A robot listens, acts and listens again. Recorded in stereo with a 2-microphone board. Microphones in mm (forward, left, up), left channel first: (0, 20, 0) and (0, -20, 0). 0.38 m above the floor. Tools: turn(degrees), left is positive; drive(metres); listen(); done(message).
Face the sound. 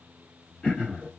turn(degrees=25)
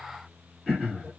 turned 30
done("Found it: throat clearing, straight ahead.")